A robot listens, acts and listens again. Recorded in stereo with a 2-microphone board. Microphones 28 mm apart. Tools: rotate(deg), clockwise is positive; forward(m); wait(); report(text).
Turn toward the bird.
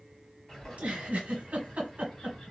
rotate(-20)
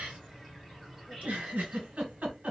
report("Found it: a bird, straight ahead.")